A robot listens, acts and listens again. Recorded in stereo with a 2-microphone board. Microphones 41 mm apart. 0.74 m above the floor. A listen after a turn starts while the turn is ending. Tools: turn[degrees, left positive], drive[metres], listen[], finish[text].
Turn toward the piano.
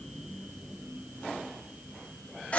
Action: listen[]
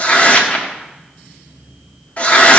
Action: listen[]
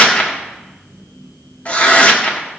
Action: finish[I can't make out a piano to turn to.]